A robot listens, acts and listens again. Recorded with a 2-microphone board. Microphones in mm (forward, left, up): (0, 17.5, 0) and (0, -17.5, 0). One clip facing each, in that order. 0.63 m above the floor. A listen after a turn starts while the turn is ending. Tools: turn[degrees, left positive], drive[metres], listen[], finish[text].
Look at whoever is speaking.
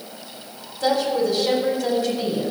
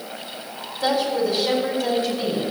Action: turn[-30]
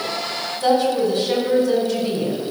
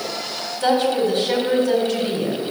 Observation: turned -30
Thought: So it is at 145° right.
Action: turn[-145]
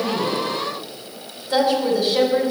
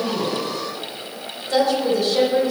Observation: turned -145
Thought: The woman speaking is now 10° left.
Action: turn[10]
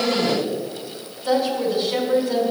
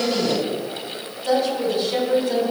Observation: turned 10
Action: finish[Facing the woman speaking, 2 to 4 m away.]